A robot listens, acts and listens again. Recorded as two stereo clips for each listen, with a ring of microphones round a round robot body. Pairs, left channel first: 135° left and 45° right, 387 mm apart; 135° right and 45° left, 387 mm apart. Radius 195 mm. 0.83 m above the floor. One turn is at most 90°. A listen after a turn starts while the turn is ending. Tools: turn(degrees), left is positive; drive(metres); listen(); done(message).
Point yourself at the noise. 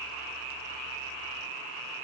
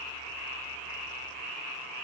listen()
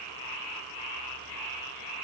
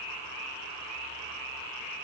listen()
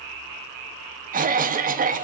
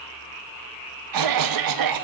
turn(degrees=20)
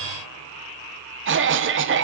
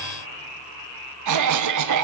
turn(degrees=10)
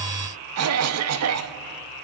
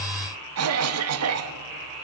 done("Found it: a cough, straight ahead.")